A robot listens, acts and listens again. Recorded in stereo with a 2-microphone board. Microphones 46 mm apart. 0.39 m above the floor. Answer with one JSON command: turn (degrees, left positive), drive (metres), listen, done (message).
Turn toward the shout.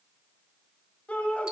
{"turn": 30}
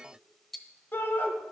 {"turn": 115}
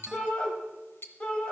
{"turn": 25}
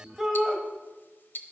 {"done": "Facing the shout."}